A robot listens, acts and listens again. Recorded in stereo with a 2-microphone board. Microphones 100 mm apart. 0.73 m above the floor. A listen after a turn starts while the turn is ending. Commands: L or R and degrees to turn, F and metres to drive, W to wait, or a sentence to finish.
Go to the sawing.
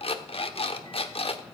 W
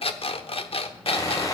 L35
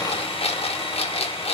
L110
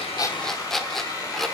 L35
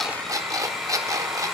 F1.0
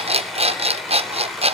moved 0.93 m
F1.0
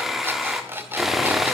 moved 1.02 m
F1.0
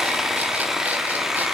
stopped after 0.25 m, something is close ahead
I am next to the sawing.